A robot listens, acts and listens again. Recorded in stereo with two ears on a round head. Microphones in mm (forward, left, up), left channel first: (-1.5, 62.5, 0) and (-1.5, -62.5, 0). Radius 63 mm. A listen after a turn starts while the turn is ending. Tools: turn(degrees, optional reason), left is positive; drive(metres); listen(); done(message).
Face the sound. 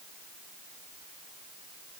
listen()
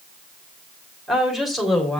turn(degrees=30)
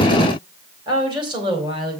turn(degrees=-35, reason="So it is at 35° right.")
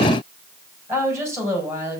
turn(degrees=-20, reason="The woman speaking is now 20° right.")
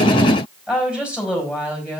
done("Facing the woman speaking, over 4 m away.")